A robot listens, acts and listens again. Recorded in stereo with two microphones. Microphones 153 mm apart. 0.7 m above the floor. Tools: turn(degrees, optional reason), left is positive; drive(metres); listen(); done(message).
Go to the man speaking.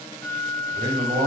turn(degrees=-90)
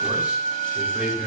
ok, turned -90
drive(metres=1.0)
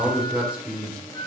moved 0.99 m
turn(degrees=-10, reason="The man speaking is now 10° right.")
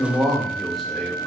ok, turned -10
drive(metres=1.0)
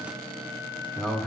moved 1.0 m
drive(metres=1.0)
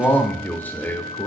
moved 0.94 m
turn(degrees=15, reason="The man speaking is now 15° left.")
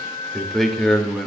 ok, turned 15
drive(metres=1.0)
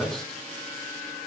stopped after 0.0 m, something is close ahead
done("Arrived at the man speaking, straight ahead.")